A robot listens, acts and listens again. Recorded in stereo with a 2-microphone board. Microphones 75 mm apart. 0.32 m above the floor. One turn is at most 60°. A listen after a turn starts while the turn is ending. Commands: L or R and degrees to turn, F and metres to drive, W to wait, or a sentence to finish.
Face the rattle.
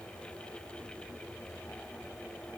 W
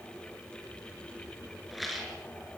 L30
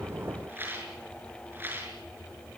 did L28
R30
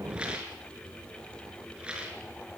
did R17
R15
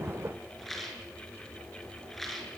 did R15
Found it: a rattle, straight ahead.